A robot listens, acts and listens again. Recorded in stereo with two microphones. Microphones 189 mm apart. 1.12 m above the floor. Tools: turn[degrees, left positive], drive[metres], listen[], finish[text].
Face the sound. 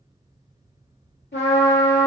Thought: The trumpet: about 70° left or 110° left.
Action: turn[70]
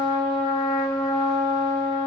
Thought: So it is at 40° left.
Action: turn[40]
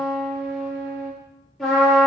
Action: finish[Facing the trumpet, 2 to 4 m away.]